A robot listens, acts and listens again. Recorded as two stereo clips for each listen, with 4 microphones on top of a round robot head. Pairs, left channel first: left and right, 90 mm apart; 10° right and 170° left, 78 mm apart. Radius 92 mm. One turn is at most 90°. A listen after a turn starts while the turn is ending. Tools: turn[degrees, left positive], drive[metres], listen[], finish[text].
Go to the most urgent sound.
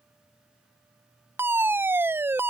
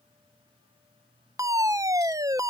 Thought: The fire alarm: 150° right.
Action: turn[-90]
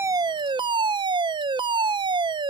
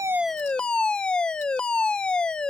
Thought: The fire alarm is now 85° right.
Action: turn[-85]
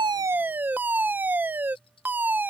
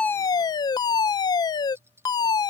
Thought: The fire alarm is now 20° right.
Action: turn[-20]
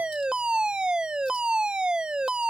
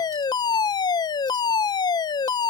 Thought: The fire alarm is now 10° right.
Action: turn[-10]
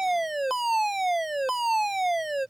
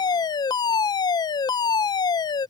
Action: drive[1.0]
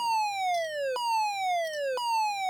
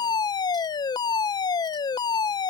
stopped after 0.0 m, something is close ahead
Action: finish[Blocked. The fire alarm is further on, straight ahead.]